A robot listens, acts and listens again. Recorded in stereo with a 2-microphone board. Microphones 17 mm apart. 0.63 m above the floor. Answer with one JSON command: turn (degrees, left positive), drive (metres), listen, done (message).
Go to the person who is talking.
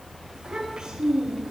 {"turn": -50}
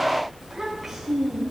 {"drive": 1.0}
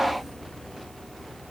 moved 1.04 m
{"listen": true}
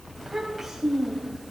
{"drive": 1.0}
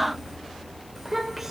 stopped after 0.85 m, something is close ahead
{"done": "I am next to the child speaking."}